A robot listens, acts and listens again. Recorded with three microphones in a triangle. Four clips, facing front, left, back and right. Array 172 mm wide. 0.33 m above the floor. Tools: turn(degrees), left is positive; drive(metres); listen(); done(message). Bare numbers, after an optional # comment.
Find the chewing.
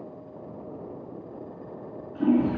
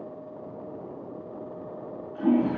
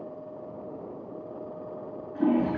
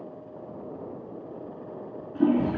listen()
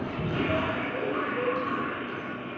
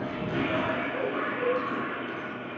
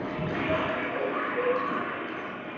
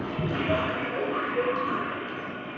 listen()
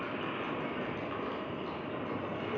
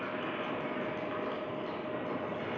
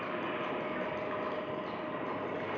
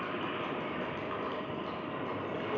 done("I can't make out chewing, only a toilet flushing.")